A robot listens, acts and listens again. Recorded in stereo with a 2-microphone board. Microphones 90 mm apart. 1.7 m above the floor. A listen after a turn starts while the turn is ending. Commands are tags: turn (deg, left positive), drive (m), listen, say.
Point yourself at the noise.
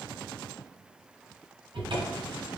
<turn deg="-70"/>
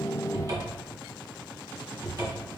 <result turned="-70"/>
<turn deg="-40"/>
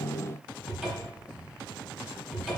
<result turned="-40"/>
<say>Facing the cupboard door.</say>